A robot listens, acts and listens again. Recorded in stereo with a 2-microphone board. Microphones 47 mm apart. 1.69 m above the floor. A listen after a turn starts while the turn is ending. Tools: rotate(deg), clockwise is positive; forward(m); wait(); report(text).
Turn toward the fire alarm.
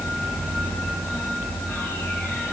wait()
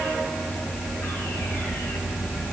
wait()
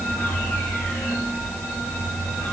report("I can't make out a fire alarm.")